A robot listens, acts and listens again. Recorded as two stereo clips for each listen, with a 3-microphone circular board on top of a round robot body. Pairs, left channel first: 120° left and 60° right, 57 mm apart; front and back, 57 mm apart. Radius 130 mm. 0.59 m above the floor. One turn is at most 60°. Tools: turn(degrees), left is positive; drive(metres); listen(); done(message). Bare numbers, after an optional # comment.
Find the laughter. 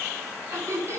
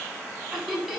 # The laughter: 105° right.
turn(-60)
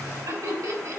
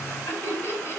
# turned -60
# The laughter is now 50° right.
turn(-50)
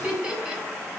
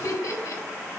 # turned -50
# The laughter is now 10° left.
turn(10)
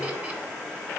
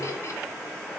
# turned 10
listen()
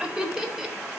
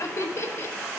# The laughter is now 15° left.
turn(15)
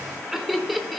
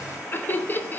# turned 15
# The laughter is now 30° left.
turn(30)
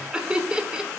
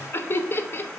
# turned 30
done("Found it: laughter, straight ahead.")